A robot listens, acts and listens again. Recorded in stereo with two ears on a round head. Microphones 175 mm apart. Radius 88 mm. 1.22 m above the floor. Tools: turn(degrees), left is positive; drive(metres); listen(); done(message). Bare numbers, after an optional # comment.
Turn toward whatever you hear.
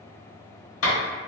# The clap: about 75° left or 105° left.
turn(75)
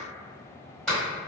done("Facing the clap, 1 to 2 m away.")